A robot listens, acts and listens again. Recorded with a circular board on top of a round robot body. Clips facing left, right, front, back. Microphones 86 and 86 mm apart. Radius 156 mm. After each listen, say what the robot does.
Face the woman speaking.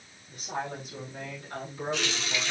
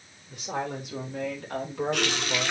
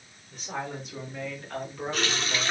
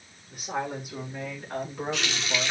Turn 110° right.
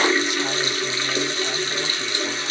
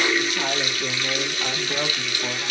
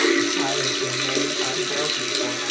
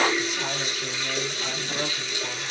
Keep listening.
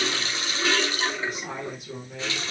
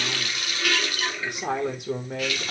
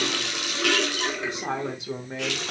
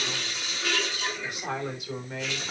Turn 70° right.
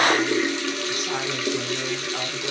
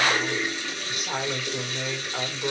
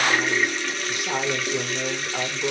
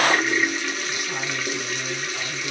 Found it: a woman speaking, straight ahead.